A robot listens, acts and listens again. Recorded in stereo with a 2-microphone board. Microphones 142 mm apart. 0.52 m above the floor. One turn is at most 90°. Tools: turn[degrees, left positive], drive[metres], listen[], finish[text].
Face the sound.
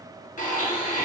Thought: The blender: about 65° left or 115° left.
Action: turn[65]
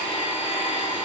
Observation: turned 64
Thought: So it is at 40° left.
Action: turn[40]
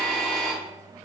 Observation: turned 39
Action: finish[Found it: a blender, straight ahead.]